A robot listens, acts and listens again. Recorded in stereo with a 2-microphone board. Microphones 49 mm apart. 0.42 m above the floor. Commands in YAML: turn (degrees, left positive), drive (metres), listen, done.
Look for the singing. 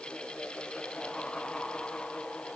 listen: true
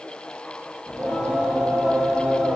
turn: -30
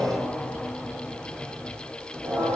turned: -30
turn: -145
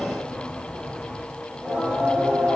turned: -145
turn: -15
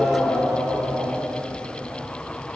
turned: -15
done: "Found it: singing, straight ahead."